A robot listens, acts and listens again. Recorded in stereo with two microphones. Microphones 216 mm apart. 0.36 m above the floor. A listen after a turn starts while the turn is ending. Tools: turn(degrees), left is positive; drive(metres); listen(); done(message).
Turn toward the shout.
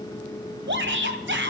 turn(degrees=-60)
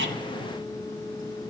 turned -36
listen()
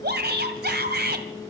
turn(degrees=-60)
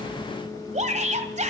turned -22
turn(degrees=-40)
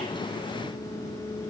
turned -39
listen()
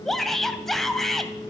done("Facing the shout, 2 to 4 m away.")